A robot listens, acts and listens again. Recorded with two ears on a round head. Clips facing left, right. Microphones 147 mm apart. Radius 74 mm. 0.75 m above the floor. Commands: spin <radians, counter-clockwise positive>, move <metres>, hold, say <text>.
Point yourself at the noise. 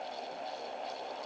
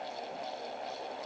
hold
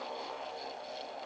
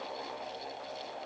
hold
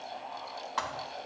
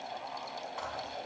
spin 1.57
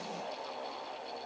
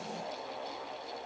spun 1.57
say I heard a thud from this way, but can't make it out now.